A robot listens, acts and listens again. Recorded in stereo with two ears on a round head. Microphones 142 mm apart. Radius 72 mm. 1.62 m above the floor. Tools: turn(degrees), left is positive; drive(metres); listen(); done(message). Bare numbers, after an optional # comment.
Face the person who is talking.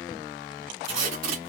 listen()
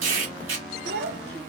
turn(-90)
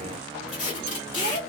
listen()
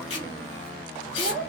done("Found it: a child speaking, straight ahead.")